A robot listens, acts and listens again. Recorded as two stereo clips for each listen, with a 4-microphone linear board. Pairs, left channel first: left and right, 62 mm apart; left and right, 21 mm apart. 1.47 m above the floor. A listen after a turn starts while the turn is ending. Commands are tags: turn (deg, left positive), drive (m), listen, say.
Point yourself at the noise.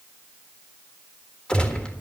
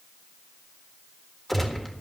<turn deg="15"/>
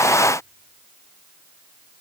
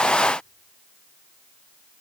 <listen/>
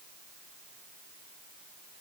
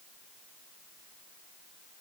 <say>I heard a gunshot, but can't make it out now. It was about straight ahead or 150° left.</say>